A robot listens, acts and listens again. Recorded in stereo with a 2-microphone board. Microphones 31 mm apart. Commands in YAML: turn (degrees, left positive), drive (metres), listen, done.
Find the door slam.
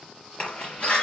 turn: 35
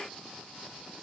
listen: true
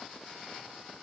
done: "I heard a door slam, but can't make it out now. It was about straight ahead or 110° left."